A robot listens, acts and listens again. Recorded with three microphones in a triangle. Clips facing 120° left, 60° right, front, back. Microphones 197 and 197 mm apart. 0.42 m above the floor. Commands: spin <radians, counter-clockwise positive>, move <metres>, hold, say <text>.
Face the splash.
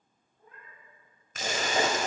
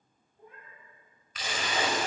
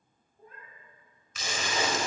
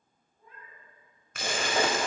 spin 2.79
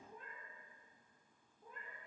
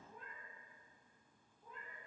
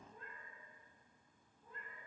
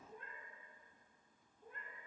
say I heard a splash from this way, but can't make it out now.